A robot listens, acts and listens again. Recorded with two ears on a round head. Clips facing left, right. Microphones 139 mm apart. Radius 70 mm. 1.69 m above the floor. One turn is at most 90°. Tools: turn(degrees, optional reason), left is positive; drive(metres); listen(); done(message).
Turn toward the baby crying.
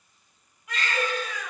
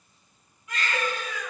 turn(degrees=55, reason="The baby crying: about 55° left or 125° left.")
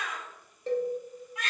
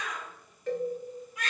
turn(degrees=60, reason="So it is at 60° left.")
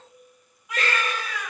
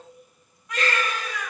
done("Facing the baby crying.")